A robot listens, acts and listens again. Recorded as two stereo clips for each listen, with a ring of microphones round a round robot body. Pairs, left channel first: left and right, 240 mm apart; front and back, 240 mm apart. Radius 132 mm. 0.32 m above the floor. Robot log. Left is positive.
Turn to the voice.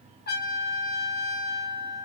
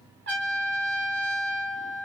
cmd idle
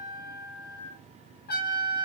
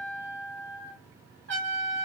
cmd idle
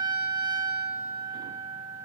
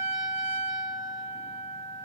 end: I can't make out anyone speaking to turn to.